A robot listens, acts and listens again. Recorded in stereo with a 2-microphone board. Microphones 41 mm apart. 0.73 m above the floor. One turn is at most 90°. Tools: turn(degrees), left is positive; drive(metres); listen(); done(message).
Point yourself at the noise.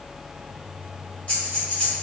turn(degrees=35)
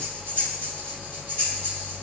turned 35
turn(degrees=90)
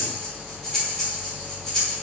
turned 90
turn(degrees=10)
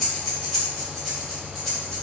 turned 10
done("Facing the breathing, 1 to 2 m away.")